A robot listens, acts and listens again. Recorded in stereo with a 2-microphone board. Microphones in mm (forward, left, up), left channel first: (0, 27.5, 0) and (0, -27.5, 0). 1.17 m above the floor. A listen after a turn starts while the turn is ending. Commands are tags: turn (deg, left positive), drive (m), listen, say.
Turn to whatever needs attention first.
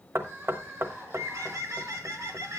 <turn deg="-35"/>
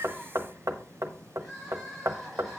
<say>Facing the crying.</say>